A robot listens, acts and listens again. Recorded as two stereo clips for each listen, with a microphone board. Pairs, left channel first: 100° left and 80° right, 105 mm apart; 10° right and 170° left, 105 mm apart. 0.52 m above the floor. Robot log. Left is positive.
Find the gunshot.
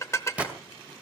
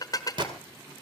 note: The gunshot: 155° right.
cmd yaw -155
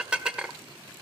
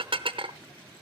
end: I heard a gunshot from this way, but can't make it out now.